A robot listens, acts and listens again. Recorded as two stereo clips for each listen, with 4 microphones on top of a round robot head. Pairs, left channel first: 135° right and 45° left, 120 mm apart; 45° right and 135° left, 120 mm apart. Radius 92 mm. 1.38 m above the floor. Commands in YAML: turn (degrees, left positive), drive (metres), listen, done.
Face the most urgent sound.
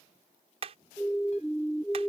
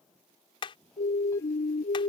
turn: -55
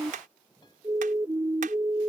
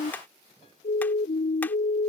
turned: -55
turn: -25
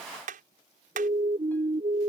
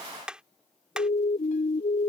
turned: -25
done: "Found it: a siren, straight ahead."